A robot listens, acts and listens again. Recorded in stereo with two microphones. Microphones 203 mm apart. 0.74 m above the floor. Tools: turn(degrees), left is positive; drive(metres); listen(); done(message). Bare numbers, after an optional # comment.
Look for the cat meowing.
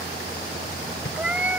turn(-30)
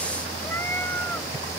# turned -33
listen()
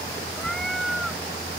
turn(30)
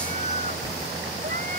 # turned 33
listen()
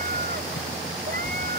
listen()
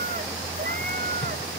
done("I heard a cat meowing, but can't make it out now. It was about 35° right or 150° left.")